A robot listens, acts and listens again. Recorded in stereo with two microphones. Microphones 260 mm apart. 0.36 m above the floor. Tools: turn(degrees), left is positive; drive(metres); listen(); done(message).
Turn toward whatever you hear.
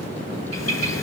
turn(degrees=90)
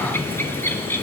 turn(degrees=10)
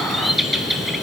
done("Found it: a bird, straight ahead.")